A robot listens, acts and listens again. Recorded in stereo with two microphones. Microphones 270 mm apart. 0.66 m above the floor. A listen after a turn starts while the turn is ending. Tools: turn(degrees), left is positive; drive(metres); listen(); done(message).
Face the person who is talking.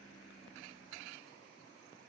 listen()
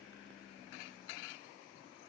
listen()
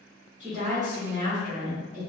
turn(degrees=-30)
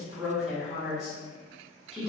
done("Facing the woman speaking.")